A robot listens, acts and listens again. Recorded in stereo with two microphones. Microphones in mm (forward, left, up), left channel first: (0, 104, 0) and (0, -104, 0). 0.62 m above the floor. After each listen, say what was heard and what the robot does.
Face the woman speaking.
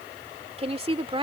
The woman speaking: about 25° right or 155° right. Turn 25° right.
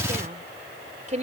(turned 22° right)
The woman speaking: about 35° right or 145° right. Turn 35° right.
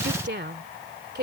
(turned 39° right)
So it is at 125° right. Turn 125° right.
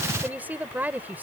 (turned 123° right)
The woman speaking is now 10° right. Turn 10° right.
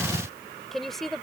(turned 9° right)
Facing the woman speaking.